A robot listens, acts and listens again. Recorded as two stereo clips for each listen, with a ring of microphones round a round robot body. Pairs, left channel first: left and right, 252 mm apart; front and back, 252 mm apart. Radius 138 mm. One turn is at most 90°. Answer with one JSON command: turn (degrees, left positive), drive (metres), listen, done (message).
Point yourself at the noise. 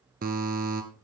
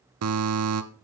{"turn": -90}
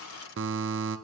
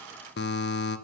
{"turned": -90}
{"turn": -50}
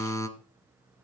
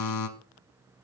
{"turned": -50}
{"turn": 10}
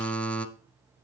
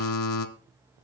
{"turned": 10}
{"done": "Facing the buzzer."}